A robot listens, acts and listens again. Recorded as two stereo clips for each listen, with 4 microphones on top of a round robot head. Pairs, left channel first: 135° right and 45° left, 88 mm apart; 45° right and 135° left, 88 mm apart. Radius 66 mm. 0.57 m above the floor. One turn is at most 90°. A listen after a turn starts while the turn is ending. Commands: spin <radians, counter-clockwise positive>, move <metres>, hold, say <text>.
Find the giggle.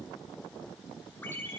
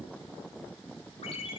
hold
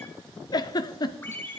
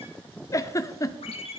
spin -1.57
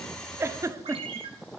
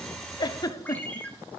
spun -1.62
say Facing the giggle.